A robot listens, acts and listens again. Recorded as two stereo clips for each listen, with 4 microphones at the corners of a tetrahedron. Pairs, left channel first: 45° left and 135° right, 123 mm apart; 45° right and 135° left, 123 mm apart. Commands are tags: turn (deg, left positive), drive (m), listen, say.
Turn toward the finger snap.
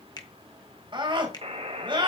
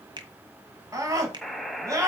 <turn deg="95"/>
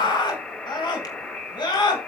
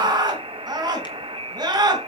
<listen/>
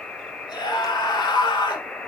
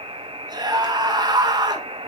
<listen/>
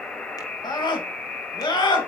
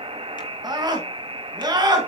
<say>Facing where the finger snap came from. I can't hear it now.</say>